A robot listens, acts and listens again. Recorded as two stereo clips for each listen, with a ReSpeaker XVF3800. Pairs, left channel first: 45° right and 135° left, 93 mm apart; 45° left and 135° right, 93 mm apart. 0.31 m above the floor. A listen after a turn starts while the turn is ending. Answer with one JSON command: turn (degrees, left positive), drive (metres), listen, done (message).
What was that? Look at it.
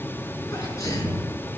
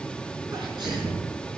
{"turn": -100}
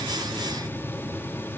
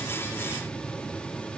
{"done": "Facing where the sneeze came from. I can't hear it now."}